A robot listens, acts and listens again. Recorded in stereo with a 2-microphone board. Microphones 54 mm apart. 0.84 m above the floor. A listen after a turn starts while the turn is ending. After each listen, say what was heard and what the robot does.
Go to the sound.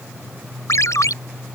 Turn 90° left.
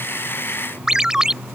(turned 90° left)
So it is at 10° right. Turn 10° right.
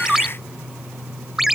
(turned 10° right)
Drive 1.0 m forward.
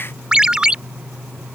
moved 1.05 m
The ringtone is now 15° right. Turn 15° right.
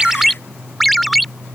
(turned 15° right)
Drive 1.0 m forward.
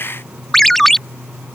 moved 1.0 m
The ringtone is now 10° left. Turn 10° left.
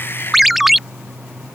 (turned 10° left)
Drive 1.0 m forward.
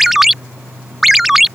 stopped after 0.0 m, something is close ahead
I am next to the ringtone.